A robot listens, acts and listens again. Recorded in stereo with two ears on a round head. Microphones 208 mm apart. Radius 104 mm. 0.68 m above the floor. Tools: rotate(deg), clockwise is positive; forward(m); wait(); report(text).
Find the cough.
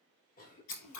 rotate(-35)
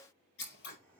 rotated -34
rotate(-10)
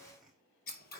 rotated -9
report("Found it: a cough, straight ahead.")